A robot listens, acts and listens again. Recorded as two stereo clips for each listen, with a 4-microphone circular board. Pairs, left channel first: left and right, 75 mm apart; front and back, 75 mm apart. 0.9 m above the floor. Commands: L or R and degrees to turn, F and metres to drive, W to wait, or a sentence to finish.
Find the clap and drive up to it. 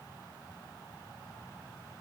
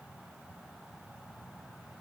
W
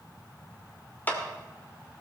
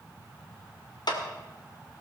L25
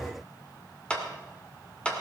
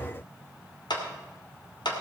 L15
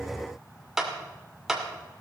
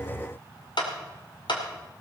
F1.0
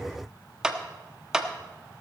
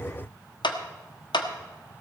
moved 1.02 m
R10
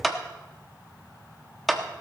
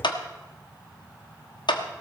F1.0
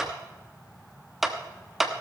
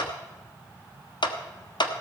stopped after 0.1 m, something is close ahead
I am next to the clap.